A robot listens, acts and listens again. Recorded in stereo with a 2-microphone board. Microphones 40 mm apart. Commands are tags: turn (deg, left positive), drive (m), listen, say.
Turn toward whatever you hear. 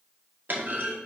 <turn deg="-50"/>
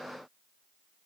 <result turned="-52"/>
<listen/>
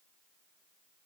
<say>I heard a clunk, but can't make it out now. It was about straight ahead or 75° right.</say>